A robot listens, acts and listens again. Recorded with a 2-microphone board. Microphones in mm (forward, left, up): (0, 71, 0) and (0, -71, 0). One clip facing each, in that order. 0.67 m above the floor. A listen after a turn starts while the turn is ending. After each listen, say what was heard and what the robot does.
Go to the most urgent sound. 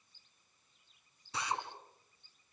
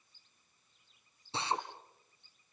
Keep listening.
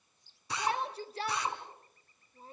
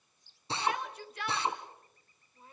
The shout: about 35° left or 145° left. Turn 35° left.
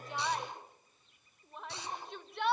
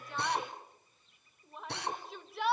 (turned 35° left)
Drive 1.0 m forward.
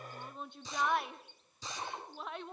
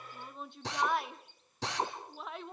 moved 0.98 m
Drive 1.0 m forward.
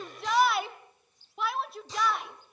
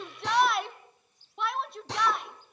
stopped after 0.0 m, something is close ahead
I am next to the shout.